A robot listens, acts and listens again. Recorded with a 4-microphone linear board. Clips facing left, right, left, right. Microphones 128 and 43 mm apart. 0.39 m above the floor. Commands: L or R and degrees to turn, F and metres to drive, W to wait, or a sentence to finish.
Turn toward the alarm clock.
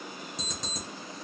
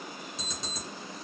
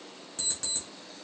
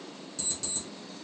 L45
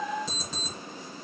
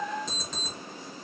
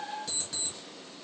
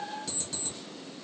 Facing the alarm clock, 2 to 4 m away.